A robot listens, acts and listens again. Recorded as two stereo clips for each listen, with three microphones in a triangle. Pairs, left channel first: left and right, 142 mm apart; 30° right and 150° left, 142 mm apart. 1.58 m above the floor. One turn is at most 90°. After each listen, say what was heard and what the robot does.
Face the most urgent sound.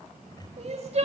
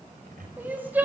The crying: 130° right. Turn 90° right.
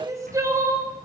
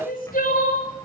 The crying is now 20° right. Turn 20° right.
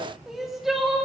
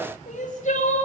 Facing the crying, 2 to 4 m away.